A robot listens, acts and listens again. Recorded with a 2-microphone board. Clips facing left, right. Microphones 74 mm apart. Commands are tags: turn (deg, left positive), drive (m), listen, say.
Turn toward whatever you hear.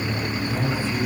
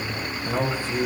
<turn deg="-90"/>
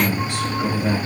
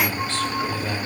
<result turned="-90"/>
<turn deg="15"/>
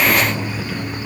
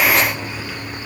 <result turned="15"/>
<listen/>
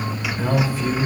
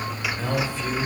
<say>Found it: a man speaking, straight ahead.</say>